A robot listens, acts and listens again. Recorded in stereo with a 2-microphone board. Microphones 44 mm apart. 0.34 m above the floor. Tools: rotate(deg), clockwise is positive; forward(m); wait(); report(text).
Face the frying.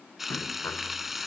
rotate(30)
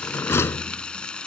rotate(-20)
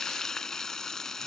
rotate(-10)
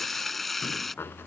report("Facing the frying.")